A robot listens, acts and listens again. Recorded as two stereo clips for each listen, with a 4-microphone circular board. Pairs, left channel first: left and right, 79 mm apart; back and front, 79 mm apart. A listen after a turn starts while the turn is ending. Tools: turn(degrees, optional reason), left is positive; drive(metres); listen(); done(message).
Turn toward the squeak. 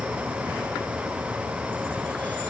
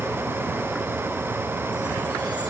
listen()
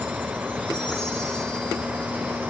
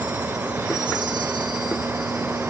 listen()
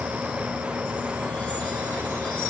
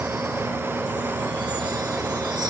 done("I can't make out a squeak to turn to.")